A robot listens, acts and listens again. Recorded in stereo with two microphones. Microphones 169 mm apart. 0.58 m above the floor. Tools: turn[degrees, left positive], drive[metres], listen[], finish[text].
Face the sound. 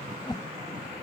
Thought: The whoosh: about 25° left or 155° left.
Action: turn[25]
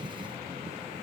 Action: listen[]
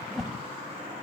Action: finish[Facing the whoosh.]